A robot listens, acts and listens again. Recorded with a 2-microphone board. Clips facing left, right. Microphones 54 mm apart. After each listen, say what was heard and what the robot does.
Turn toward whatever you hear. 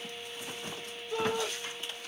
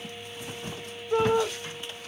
The shout: about 50° right or 130° right. Turn 50° right.
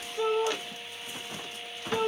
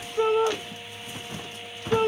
So it is at 60° right. Turn 60° right.
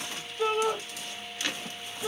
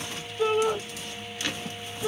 Facing the shout.